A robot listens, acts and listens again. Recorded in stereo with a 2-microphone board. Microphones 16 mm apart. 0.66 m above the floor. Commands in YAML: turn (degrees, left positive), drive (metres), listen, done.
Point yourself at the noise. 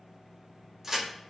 turn: -25
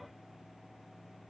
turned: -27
listen: true
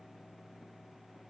done: "I heard a crack, but can't make it out now. It was about straight ahead or 130° right."